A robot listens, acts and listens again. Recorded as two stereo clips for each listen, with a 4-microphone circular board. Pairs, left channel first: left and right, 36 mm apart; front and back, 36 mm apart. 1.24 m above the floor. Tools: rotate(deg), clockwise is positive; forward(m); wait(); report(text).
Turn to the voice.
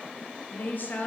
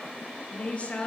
rotate(-55)
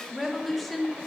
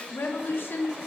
report("Found it: a woman speaking, straight ahead.")